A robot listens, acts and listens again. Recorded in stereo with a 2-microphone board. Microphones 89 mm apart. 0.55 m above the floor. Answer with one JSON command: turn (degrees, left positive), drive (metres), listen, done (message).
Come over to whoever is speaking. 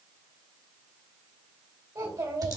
{"turn": -45}
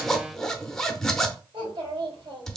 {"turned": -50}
{"turn": -80}
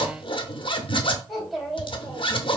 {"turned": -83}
{"drive": 1.0}
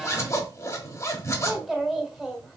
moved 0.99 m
{"drive": 1.0}
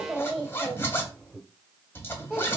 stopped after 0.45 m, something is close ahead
{"done": "I am next to the child speaking."}